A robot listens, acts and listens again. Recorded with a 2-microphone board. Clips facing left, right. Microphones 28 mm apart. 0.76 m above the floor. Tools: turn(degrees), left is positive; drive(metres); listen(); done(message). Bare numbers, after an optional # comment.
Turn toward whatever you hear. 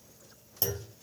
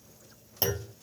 # The clunk: about 35° right or 145° right.
turn(-35)
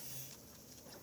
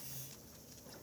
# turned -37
listen()
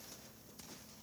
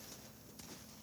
done("I heard a clunk, but can't make it out now. It was about straight ahead or 105° right.")